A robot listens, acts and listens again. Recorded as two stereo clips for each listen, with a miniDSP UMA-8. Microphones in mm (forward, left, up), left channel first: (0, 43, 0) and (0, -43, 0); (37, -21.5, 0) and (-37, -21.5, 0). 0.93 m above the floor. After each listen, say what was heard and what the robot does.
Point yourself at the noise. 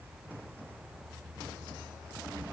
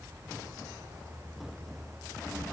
Keep listening.
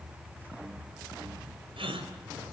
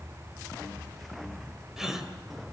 The gasp: 95° right. Turn 95° right.
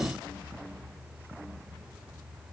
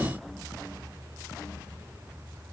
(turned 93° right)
Facing where the gasp came from. I can't hear it now.